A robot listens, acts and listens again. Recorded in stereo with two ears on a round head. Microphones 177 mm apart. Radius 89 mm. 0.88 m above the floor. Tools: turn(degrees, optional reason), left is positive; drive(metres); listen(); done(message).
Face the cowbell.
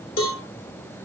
turn(degrees=90)
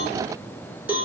turn(degrees=-10, reason="So it is at 10° right.")
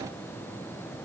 listen()
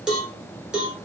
done("Found it: a cowbell, straight ahead.")